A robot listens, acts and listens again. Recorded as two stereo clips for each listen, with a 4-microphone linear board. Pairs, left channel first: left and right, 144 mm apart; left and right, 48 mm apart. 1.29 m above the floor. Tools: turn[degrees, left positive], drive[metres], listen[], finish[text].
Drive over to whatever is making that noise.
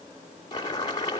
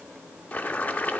Thought: The boiling: about 30° left or 150° left.
Action: turn[30]
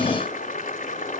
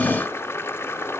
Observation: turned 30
Thought: So it is at 120° left.
Action: turn[120]
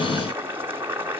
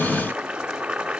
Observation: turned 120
Thought: The boiling is now 15° right.
Action: turn[-15]
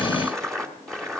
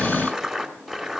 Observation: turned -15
Action: drive[1.0]
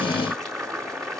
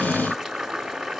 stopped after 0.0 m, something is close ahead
Action: finish[Blocked. The boiling is further on, straight ahead.]